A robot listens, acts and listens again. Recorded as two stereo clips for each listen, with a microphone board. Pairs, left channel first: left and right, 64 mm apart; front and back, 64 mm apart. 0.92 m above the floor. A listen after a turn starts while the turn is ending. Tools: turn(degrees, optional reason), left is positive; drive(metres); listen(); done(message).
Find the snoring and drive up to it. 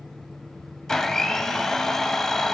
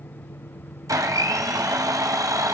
listen()
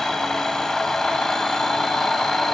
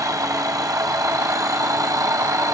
listen()
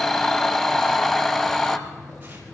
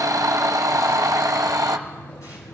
done("I can't make out snoring, only a blender.")